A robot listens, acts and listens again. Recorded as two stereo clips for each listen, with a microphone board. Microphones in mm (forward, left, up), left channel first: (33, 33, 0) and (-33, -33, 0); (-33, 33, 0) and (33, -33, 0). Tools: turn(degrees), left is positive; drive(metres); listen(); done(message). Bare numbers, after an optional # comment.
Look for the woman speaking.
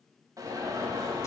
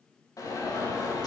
listen()
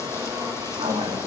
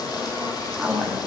# The woman speaking: 135° right.
turn(-135)
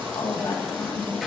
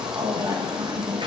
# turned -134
done("Found it: a woman speaking, straight ahead.")